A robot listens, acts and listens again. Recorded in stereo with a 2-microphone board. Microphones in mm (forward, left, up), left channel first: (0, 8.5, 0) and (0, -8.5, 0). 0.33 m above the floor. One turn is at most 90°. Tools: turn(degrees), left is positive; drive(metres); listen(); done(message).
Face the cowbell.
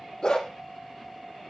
listen()
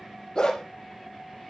listen()
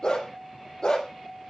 done("I can't make out a cowbell, only a dog barking.")